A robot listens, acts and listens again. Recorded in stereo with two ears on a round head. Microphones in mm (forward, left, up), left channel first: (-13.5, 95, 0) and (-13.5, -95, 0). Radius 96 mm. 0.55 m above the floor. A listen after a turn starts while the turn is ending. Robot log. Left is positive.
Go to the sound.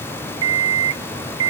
note: The alarm clock: about 65° right or 115° right.
cmd yaw -65
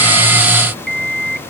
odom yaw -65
cmd fwd 1.0
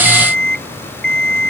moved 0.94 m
cmd fwd 1.0
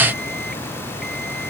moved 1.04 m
cmd idle
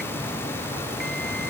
cmd idle
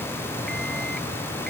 end: Facing where the alarm clock came from. I can't hear it now. I did not reach it.